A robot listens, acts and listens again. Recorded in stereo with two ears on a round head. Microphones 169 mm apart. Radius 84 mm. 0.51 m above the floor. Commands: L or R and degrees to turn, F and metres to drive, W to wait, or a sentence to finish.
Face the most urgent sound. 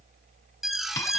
L30
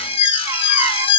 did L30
L150
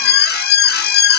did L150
L60
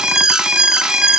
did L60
Facing the alarm, under 1 m away.